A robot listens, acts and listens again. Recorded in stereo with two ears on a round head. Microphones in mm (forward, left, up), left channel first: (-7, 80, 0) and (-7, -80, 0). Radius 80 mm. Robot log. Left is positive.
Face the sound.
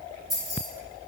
cmd yaw +30
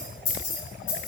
note: So it is at 135° left.
cmd yaw +135
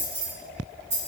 note: The keys jangling is now 20° right.
cmd yaw -20
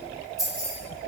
end: Found it: keys jangling, straight ahead, 2 to 4 m away.